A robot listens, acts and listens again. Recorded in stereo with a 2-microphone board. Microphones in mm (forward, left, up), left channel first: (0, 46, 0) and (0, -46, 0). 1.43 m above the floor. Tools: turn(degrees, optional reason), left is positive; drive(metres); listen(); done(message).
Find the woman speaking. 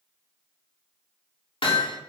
listen()
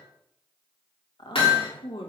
turn(degrees=65, reason="The woman speaking: about 65° left or 115° left.")
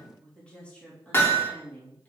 turn(degrees=20, reason="So it is at 20° left.")
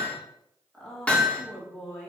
done("Facing the woman speaking, 2 to 4 m away.")